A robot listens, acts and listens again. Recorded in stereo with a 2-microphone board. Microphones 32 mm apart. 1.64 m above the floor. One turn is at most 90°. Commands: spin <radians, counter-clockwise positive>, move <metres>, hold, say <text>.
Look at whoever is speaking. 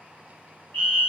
hold
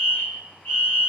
hold
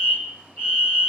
say I can't make out anyone speaking, only a fire alarm.